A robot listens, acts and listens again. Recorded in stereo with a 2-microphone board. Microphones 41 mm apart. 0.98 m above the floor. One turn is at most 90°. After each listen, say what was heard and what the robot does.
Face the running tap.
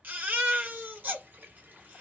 The running tap: about 55° right or 125° right. Turn 55° right.
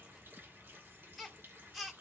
So it is at 70° right. Turn 70° right.
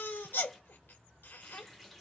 Facing the running tap, 1 to 2 m away.